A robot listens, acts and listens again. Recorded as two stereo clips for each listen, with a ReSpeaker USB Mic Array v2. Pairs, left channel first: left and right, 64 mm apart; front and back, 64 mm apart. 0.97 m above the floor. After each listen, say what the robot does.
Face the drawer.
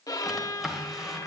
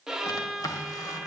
Found it: a drawer, straight ahead, 1 to 2 m away.